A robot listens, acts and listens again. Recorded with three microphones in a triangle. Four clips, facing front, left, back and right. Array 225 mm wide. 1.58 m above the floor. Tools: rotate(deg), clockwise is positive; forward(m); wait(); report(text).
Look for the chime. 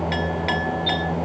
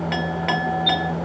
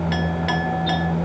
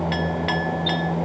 rotate(15)
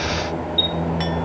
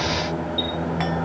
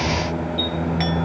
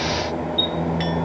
report("Facing the chime, over 4 m away.")